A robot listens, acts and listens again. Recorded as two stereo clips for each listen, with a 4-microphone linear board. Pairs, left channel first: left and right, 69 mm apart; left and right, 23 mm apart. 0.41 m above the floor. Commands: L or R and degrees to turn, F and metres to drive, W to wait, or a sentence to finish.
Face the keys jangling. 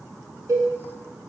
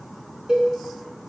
W
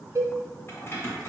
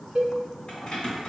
L35
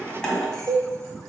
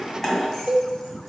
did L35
L10
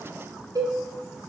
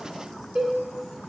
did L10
W
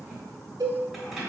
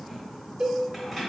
Found it: keys jangling, straight ahead.